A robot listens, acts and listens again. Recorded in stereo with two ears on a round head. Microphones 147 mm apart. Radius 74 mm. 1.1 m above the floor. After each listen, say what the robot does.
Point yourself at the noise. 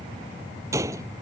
Turn 20° right.
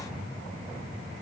Keep listening.
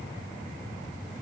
I heard a gunshot, but can't make it out now. It was about straight ahead or 140° right.